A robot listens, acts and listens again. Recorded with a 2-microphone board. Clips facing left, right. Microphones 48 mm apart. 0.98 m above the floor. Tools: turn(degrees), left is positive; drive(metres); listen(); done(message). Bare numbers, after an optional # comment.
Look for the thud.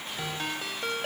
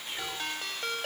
listen()
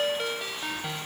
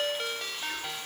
listen()
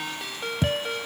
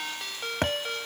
# The thud: about 60° right or 120° right.
turn(-60)
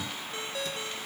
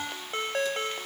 listen()
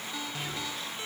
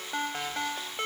done("I heard a thud, but can't make it out now. It was about straight ahead or 60° right.")